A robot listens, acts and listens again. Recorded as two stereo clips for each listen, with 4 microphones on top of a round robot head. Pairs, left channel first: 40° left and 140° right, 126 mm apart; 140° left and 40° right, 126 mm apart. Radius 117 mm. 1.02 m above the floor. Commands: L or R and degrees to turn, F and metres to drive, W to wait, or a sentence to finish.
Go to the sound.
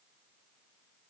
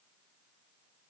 W
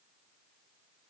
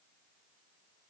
W
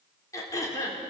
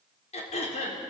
L105
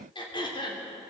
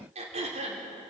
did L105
R10
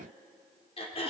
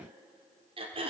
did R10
F1.0
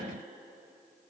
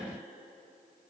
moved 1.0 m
W
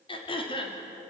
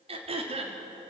F1.0
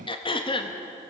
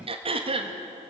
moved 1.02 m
F1.0
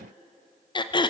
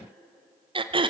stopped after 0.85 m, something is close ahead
I am next to the throat clearing.